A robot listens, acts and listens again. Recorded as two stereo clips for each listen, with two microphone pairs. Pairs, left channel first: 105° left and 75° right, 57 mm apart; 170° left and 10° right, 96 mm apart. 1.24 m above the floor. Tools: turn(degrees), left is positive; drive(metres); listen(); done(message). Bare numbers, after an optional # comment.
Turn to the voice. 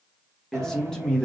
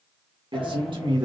# The man speaking: 30° left.
turn(30)
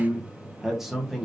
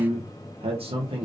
# The man speaking is now 15° left.
turn(15)
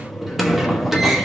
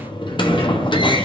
listen()
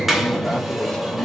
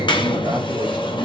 listen()
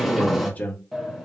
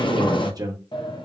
# The man speaking is now 45° left.
turn(45)
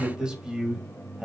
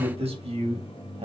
done("Facing the man speaking, 1 to 2 m away.")